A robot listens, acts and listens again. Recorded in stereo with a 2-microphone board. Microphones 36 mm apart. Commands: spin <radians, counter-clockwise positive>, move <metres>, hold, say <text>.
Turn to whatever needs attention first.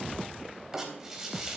hold
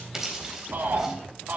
spin -1.57
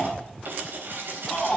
say Found it: a shout, straight ahead, 2 to 4 m away.